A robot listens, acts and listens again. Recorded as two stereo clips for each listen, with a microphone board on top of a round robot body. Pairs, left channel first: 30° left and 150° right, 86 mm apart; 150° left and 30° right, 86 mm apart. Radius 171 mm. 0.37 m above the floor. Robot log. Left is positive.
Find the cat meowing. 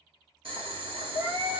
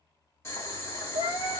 note: The cat meowing: 165° left.
cmd yaw +165
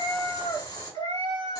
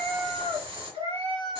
end: Found it: a cat meowing, straight ahead, 2 to 4 m away.